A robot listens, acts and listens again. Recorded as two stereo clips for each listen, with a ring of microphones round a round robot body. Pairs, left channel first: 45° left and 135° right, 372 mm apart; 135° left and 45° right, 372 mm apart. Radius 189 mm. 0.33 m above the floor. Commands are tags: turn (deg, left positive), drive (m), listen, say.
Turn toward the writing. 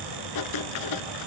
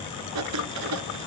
<say>Facing the writing, under 1 m away.</say>